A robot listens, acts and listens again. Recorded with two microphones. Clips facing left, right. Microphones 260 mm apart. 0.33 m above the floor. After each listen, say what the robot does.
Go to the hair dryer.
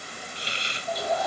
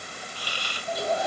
Turn 30° right.
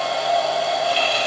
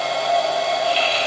Drive 1.0 m forward.
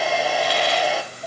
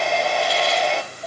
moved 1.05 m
Drive 1.0 m forward.
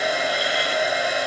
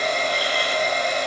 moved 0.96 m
Turn 10° left.
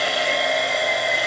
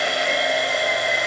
Drive 1.0 m forward.
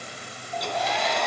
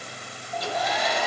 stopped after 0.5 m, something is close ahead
I am next to the hair dryer.